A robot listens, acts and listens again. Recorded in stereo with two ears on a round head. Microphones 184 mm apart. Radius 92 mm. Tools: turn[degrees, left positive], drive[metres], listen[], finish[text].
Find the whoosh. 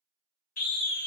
Action: listen[]
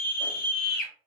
Action: listen[]
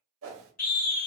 Action: turn[-90]
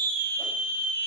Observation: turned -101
Thought: Nothing new. It was at 10° left.
Action: turn[10]
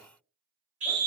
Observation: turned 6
Action: listen[]
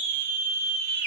Action: finish[Facing where the whoosh came from. I can't hear it now.]